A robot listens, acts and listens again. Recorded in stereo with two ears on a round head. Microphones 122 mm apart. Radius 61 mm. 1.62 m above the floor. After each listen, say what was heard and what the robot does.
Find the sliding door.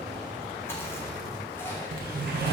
Turn 90° right.
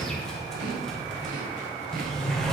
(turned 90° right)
Found it: a sliding door, straight ahead, 1 to 2 m away.